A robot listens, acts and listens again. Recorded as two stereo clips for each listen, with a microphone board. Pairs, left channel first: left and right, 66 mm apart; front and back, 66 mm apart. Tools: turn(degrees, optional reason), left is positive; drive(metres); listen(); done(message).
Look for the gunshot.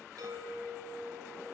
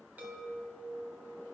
listen()
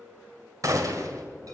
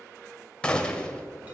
turn(degrees=-75, reason="The gunshot: 75° right.")
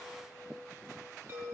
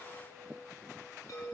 done("I heard a gunshot from this way, but can't make it out now.")